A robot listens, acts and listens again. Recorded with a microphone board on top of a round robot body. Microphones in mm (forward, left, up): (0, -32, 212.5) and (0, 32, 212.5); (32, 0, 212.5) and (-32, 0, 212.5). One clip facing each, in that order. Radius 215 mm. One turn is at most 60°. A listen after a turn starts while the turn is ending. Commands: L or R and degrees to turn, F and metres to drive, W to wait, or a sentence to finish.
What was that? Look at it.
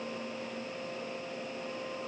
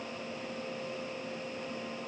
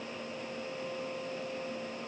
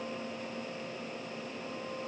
W
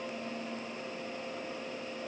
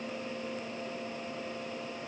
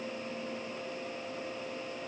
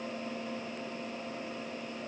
W
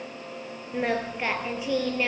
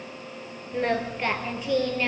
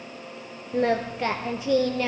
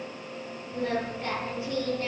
Facing the singing.